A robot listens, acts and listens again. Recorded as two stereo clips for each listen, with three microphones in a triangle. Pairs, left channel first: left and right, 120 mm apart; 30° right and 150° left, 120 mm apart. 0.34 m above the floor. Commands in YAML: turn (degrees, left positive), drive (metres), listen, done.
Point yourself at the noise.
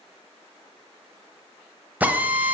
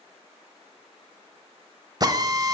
turn: -160
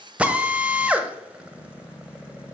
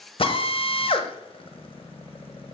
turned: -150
turn: -15
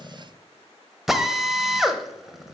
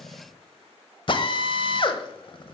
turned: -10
done: "Found it: a drill, straight ahead, under 1 m away."